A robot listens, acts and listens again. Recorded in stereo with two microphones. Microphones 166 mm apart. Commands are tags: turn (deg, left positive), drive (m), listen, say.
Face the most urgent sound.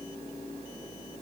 <listen/>
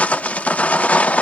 <listen/>
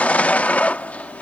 <say>I can't make out anything urgent to turn to.</say>